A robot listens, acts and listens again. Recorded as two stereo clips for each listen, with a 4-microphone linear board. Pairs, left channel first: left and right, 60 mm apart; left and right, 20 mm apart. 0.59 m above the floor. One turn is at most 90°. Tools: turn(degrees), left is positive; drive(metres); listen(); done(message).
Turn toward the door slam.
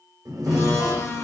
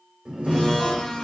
turn(degrees=-75)
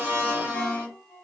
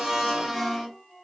listen()
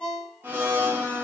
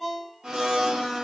done("I heard a door slam, but can't make it out now. It was about straight ahead or 30° right.")